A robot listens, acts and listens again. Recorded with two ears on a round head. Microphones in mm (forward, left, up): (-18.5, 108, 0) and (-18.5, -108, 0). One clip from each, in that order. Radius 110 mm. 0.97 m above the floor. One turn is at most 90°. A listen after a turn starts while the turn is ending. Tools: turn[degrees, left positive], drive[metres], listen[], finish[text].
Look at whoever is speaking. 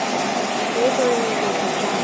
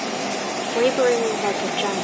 Thought: The woman speaking: about 40° right or 140° right.
Action: turn[-40]
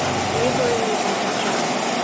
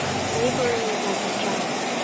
Action: listen[]
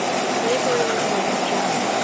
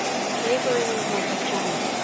Action: listen[]
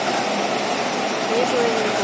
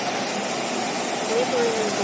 Action: finish[Facing the woman speaking.]